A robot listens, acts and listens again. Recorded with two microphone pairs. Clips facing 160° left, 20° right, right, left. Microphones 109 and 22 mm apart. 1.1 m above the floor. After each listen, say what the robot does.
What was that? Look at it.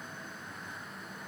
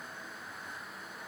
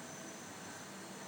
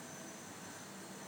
Keep listening.
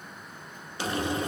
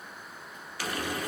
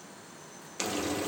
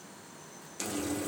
Turn 140° right.
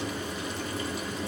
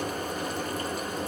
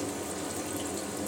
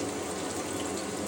Turn 15° left.
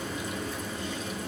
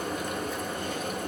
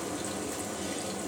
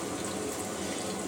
Facing the frying, 1 to 2 m away.